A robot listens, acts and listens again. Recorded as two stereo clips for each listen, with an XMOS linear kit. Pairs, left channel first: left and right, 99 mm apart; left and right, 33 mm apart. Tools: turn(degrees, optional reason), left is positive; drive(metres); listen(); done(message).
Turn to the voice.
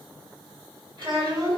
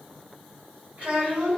turn(degrees=-60, reason="The child speaking: about 60° right or 120° right.")
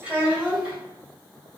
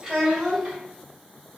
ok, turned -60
turn(degrees=-15, reason="So it is at 15° right.")
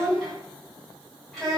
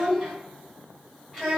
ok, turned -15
done("Found it: a child speaking, straight ahead.")